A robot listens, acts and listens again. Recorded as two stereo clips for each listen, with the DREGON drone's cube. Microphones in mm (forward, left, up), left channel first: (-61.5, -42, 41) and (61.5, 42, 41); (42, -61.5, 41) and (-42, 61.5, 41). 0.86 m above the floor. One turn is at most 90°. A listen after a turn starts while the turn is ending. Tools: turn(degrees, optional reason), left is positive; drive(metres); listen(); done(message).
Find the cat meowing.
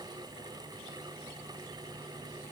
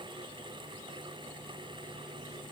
listen()
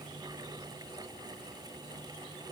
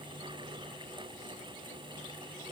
listen()
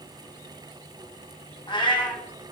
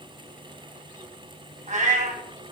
turn(degrees=90, reason="The cat meowing: 155° left.")
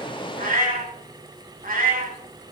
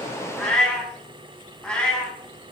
turn(degrees=25, reason="The cat meowing is now 25° left.")
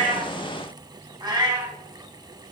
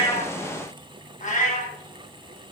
turn(degrees=-25, reason="The cat meowing is now 25° right.")
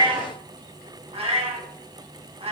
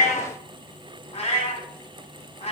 turn(degrees=-10, reason="The cat meowing is now 10° right.")
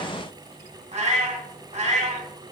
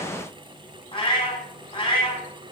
done("Found it: a cat meowing, straight ahead, 2 to 4 m away.")